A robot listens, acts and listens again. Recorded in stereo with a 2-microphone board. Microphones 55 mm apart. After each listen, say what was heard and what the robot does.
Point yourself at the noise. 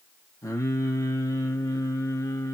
Turn 90° left.
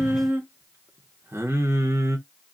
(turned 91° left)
So it is at 60° right. Turn 60° right.
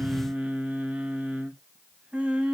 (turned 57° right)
The singing is now 20° right. Turn 20° right.
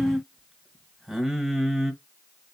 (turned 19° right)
Found it: singing, straight ahead, 1 to 2 m away.